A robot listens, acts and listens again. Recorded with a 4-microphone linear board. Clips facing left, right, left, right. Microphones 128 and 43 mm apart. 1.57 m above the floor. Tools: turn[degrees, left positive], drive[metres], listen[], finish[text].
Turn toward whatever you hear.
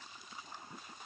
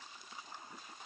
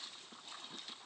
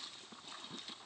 Action: listen[]
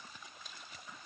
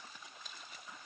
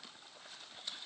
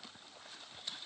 Action: listen[]
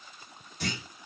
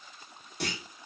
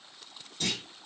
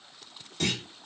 Thought: The clunk: about 70° right or 110° right.
Action: turn[-70]
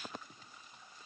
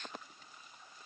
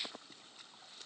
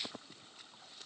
Action: listen[]
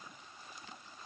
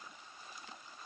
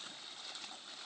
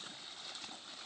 Action: finish[I heard a clunk, but can't make it out now. It was about straight ahead or 40° right.]